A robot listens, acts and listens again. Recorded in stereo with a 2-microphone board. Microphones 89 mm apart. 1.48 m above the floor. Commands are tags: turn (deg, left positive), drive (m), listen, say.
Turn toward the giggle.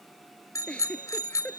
<turn deg="30"/>
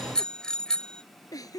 <turn deg="140"/>
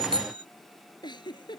<turn deg="55"/>
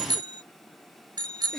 <listen/>
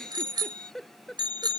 <say>Facing the giggle.</say>